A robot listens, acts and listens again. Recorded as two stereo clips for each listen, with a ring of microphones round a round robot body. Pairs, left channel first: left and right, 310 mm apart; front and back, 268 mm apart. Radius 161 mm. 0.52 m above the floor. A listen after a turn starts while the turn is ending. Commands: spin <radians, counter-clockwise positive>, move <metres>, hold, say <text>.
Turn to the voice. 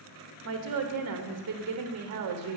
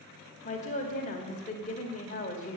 spin -1.05
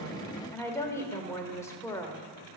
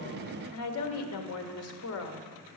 spin 0.17
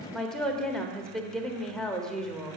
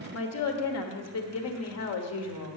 say Facing the woman speaking.